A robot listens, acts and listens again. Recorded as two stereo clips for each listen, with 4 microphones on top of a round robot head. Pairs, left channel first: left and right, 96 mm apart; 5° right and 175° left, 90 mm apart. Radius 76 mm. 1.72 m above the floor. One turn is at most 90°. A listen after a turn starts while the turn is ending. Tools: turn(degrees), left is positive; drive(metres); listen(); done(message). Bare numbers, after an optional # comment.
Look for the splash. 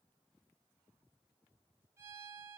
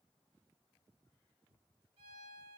listen()
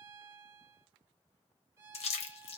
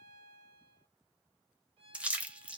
# The splash: 95° left.
turn(90)
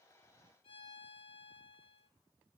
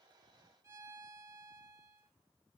done("Facing where the splash came from. I can't hear it now.")